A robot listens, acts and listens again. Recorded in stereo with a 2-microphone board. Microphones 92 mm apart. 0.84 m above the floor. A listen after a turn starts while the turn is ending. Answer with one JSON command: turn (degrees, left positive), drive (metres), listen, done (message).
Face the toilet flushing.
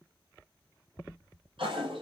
{"turn": -90}
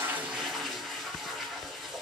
{"done": "Found it: a toilet flushing, straight ahead."}